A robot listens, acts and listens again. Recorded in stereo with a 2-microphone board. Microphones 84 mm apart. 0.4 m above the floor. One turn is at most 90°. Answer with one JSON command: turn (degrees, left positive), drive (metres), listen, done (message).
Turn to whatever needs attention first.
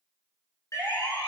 {"turn": 35}
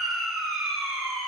{"done": "Found it: a siren, straight ahead."}